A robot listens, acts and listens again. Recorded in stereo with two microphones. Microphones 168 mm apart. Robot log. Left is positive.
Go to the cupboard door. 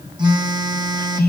cmd idle
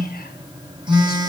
cmd idle
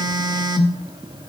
end: I can't make out a cupboard door, only a phone buzzing.